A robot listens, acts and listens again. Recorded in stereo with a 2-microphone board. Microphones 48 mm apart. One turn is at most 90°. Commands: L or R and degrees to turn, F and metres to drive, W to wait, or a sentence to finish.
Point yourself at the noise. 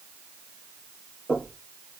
L30
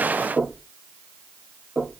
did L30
R15
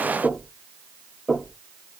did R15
Facing the knocking.